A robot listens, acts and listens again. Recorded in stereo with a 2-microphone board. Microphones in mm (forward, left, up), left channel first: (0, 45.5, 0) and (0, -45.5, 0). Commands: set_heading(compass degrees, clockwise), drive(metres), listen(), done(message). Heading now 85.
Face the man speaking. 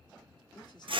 set_heading(35)
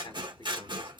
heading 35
set_heading(335)
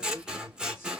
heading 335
listen()
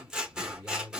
set_heading(305)
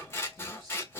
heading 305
listen()
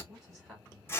done("Facing the man speaking, over 4 m away.")